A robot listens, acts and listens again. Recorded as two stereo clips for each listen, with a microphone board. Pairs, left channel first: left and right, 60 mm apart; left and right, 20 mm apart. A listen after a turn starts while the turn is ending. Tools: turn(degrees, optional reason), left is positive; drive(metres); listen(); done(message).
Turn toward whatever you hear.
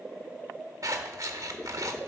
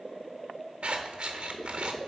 turn(degrees=-60, reason="The scissors: about 60° right or 120° right.")
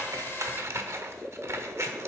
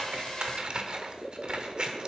turn(degrees=-50, reason="So it is at 50° right.")
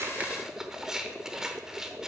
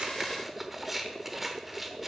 done("Found it: scissors, straight ahead, 1 to 2 m away.")